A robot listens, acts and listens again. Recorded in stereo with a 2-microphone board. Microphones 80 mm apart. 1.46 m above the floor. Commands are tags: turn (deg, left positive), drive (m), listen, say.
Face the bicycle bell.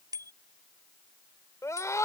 <turn deg="-55"/>
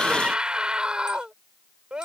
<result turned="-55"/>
<listen/>
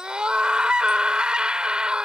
<listen/>
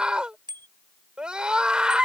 <turn deg="-70"/>
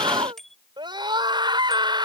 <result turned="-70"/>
<say>Found it: a bicycle bell, straight ahead.</say>